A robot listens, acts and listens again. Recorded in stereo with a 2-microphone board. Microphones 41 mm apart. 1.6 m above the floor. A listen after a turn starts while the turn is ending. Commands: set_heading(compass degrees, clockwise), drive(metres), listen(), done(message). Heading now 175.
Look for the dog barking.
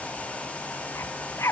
set_heading(85)
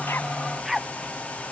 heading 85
done("Facing the dog barking.")